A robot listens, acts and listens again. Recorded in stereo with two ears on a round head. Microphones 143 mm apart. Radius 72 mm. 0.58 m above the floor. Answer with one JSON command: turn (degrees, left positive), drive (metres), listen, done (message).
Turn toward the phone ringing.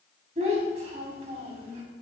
{"listen": true}
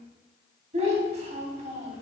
{"listen": true}
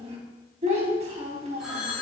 {"turn": 30}
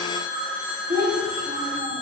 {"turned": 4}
{"turn": -30}
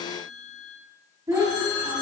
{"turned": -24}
{"turn": 20}
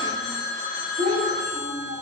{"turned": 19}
{"done": "Found it: a phone ringing, straight ahead, 2 to 4 m away."}